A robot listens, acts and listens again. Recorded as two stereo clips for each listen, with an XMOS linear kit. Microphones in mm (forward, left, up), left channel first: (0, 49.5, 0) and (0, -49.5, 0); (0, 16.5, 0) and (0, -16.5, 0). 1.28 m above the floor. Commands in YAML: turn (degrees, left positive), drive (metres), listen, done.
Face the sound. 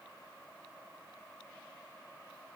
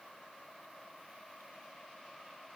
listen: true
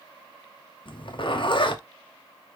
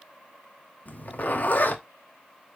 turn: 65
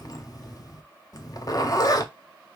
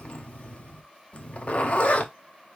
turn: 45
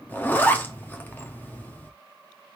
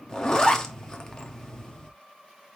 turn: 20
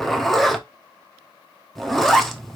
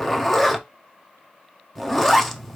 done: "Facing the zipper, under 1 m away."